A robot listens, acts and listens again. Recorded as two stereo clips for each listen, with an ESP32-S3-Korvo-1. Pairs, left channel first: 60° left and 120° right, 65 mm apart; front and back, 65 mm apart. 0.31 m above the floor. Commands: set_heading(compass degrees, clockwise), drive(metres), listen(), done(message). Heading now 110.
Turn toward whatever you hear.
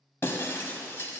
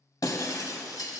set_heading(100)
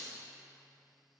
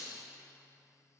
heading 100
done("I heard breaking glass from this way, but can't make it out now.")